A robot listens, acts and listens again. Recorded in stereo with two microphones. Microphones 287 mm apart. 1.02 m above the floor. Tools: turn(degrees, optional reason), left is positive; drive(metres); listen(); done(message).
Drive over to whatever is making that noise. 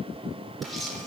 turn(degrees=30)
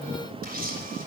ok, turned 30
turn(degrees=-30, reason="So it is at 30° right.")
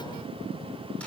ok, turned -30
listen()
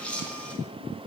drive(metres=1.0)
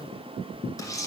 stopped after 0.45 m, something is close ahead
turn(degrees=10, reason="The camera shutter is now 10° left.")
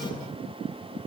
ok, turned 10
listen()
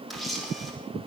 done("Something is in my way. I am facing the camera shutter but have not reached it.")